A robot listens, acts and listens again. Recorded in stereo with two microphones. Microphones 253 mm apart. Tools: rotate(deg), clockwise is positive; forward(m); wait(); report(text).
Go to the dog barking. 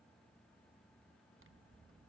wait()
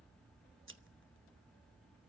wait()
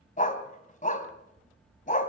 rotate(-30)
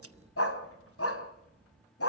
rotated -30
rotate(-115)
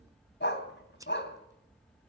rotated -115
rotate(-45)
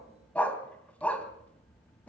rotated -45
forward(1.0)
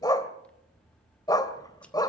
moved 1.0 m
rotate(-15)
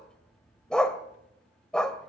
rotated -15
forward(1.0)
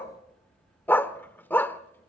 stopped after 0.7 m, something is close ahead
rotate(-10)
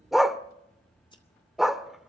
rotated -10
report("Arrived at the dog barking, straight ahead.")